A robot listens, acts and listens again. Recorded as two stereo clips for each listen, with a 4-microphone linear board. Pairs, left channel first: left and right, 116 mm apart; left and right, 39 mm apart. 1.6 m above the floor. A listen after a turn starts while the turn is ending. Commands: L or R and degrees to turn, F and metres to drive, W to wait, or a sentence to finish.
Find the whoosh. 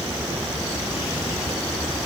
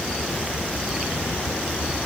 W
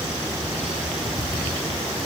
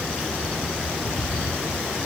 W
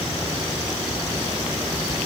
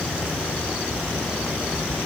I can't make out a whoosh.